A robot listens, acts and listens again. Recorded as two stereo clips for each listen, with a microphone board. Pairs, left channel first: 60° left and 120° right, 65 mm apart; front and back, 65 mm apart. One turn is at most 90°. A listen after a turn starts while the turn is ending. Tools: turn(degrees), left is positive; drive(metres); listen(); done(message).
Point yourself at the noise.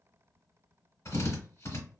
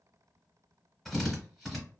turn(degrees=90)
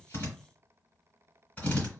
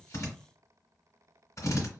done("Facing the drill.")